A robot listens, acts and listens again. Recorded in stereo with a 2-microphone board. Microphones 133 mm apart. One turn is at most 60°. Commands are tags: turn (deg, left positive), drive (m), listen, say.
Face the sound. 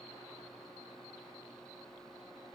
<listen/>
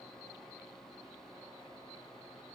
<listen/>
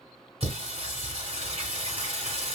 <turn deg="-50"/>
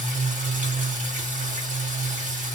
<turn deg="-60"/>
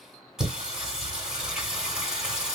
<say>Facing the singing, 2 to 4 m away.</say>